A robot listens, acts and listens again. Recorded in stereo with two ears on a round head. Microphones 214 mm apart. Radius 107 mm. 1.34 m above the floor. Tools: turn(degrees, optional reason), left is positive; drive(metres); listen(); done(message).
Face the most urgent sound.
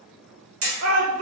turn(degrees=-65, reason="The shout: about 65° right or 115° right.")
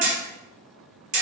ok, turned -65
listen()
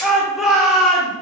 done("Facing the shout.")